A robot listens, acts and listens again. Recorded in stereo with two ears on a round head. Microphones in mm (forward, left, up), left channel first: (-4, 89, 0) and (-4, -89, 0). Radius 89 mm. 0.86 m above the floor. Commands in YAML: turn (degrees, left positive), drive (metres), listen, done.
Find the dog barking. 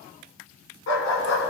turn: 75
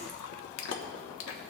listen: true
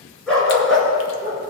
done: "Facing the dog barking, 2 to 4 m away."